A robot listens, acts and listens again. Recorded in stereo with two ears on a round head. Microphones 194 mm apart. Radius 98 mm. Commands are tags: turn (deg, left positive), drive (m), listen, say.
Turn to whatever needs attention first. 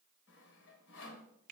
<listen/>
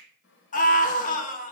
<turn deg="35"/>
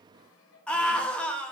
<say>Found it: a scream, straight ahead.</say>